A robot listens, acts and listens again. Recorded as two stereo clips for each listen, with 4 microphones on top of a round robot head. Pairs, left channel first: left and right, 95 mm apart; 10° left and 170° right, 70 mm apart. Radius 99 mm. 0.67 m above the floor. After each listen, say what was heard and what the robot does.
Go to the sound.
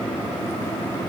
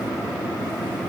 Keep listening.
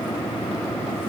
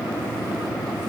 Keep listening.
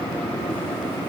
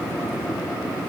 I can't make out anything.